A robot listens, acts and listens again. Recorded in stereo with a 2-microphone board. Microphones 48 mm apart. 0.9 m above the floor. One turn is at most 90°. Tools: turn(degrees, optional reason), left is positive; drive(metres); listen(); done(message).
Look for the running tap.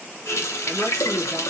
turn(degrees=90)
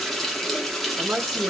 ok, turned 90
done("Found it: a running tap, straight ahead, under 1 m away.")